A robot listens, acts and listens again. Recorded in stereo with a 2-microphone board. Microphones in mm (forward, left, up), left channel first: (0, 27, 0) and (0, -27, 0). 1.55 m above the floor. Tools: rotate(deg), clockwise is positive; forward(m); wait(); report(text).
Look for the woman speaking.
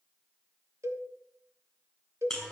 wait()
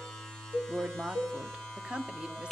rotate(20)
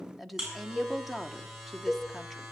report("Found it: a woman speaking, straight ahead.")